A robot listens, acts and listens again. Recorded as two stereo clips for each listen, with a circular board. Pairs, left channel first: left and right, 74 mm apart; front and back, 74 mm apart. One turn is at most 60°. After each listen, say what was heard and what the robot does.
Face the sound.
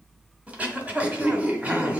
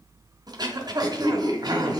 The throat clearing: 160° right. Turn 60° right.
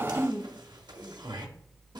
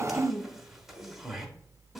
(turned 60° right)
The throat clearing is now 95° right. Turn 60° right.
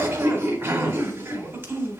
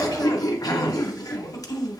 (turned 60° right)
The throat clearing is now 35° right. Turn 35° right.
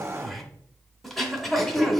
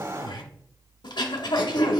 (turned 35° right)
Facing the throat clearing.